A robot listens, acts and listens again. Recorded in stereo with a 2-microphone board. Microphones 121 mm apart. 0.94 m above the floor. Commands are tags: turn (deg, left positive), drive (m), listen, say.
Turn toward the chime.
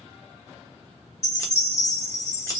<turn deg="60"/>
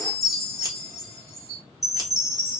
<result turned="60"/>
<say>Facing the chime, 2 to 4 m away.</say>